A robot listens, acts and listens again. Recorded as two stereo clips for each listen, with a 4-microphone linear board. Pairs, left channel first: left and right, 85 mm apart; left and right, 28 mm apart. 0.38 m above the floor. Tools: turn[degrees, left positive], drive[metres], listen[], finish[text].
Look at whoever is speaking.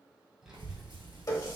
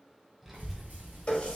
Action: turn[-30]
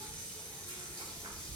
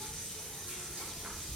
Thought: So it is at 140° right.
Action: turn[-140]
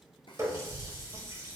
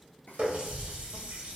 Thought: The child speaking is now 10° left.
Action: turn[10]
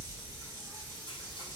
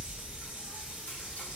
Action: finish[Found it: a child speaking, straight ahead.]